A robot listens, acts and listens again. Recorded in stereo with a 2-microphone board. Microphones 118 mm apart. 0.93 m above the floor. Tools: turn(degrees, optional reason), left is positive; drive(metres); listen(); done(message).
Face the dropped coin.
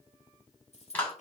turn(degrees=65, reason="The dropped coin: about 65° left or 115° left.")
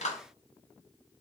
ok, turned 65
listen()
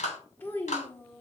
done("I heard a dropped coin, but can't make it out now. It was about straight ahead or 50° left.")